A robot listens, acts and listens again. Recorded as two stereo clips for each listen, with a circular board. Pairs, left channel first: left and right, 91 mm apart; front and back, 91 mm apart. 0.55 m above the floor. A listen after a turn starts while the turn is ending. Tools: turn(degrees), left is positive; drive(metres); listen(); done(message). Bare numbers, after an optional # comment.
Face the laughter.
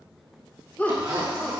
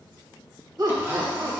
# The laughter: 155° left.
turn(155)
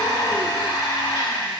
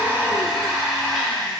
listen()
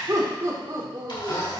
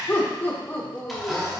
# The laughter is now 70° right.
turn(-70)
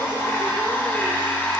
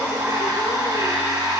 listen()
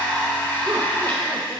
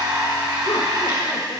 listen()
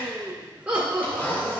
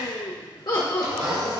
# The laughter is now 20° right.
turn(-20)
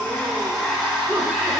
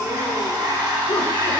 listen()
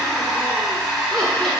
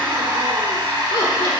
listen()
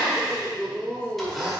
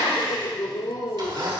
done("Facing the laughter.")